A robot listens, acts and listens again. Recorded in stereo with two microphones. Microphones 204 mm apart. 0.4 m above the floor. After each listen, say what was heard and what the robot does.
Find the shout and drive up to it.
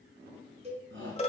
The shout: about 70° right or 110° right. Turn 70° right.
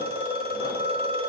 Keep listening.
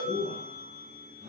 So it is at 40° right. Turn 40° right.
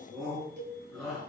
Drive 1.0 m forward.
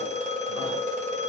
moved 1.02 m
Keep listening.
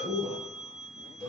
Drive 1.0 m forward.
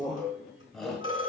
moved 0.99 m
Drive 1.0 m forward.
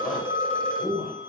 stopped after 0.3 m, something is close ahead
Arrived at the shout, straight ahead.